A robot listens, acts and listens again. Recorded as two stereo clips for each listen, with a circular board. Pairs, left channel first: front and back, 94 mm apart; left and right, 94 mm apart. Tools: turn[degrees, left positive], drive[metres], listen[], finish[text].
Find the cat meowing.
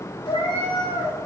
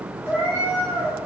Thought: The cat meowing: 30° left.
Action: turn[30]
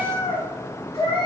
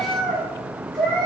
Thought: The cat meowing is now 10° left.
Action: turn[10]
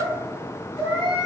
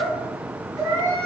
Action: finish[Found it: a cat meowing, straight ahead, 2 to 4 m away.]